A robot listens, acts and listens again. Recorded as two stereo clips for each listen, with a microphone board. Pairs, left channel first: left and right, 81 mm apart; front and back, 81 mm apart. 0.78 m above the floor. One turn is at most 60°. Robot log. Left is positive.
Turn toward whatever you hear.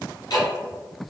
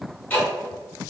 note: The ticking: 70° left.
cmd yaw +60
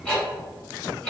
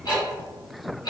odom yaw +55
note: The ticking is now 10° left.
cmd yaw +10
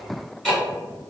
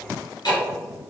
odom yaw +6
end: Found it: ticking, straight ahead, 1 to 2 m away.